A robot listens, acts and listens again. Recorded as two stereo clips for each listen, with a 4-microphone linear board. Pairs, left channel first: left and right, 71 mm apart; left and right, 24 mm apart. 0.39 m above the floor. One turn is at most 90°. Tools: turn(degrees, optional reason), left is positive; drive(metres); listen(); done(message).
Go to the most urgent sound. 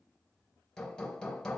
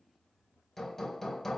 listen()
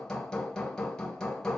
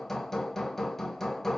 listen()
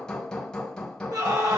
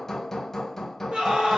turn(degrees=-70, reason="The scream: about 70° right or 110° right.")
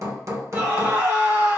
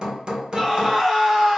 turn(degrees=-35, reason="So it is at 35° right.")
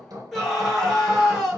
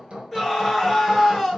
drive(metres=1.0)
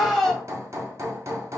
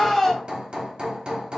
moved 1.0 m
drive(metres=1.0)
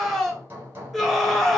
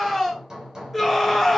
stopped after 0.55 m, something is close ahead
done("I am next to the scream.")